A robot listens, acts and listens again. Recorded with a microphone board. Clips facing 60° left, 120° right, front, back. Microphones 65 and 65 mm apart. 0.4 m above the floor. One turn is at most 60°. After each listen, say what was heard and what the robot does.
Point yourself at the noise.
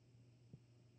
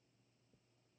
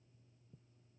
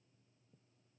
Keep listening.
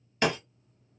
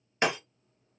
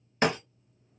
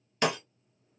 The breaking glass: 55° right. Turn 55° right.
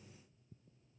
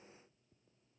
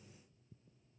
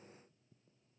I heard breaking glass from this way, but can't make it out now.